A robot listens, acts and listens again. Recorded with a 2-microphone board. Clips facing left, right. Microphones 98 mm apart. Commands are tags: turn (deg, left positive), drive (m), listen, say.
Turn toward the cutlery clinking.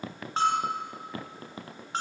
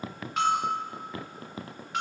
<listen/>
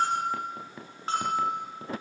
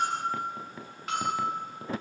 <listen/>
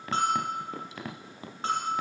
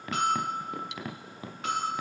<turn deg="-90"/>
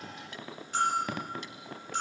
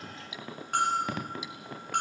<say>Found it: cutlery clinking, straight ahead, 2 to 4 m away.</say>